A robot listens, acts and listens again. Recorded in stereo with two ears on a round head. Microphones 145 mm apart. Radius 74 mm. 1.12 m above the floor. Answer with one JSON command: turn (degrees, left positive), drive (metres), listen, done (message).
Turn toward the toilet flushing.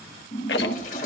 {"turn": 45}
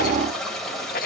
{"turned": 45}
{"done": "Facing the toilet flushing."}